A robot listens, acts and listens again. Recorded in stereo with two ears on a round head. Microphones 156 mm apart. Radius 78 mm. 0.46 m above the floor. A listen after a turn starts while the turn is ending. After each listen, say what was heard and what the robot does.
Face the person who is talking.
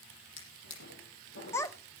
The child speaking: about 15° left or 165° left. Turn 15° left.
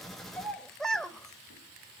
Found it: a child speaking, straight ahead, under 1 m away.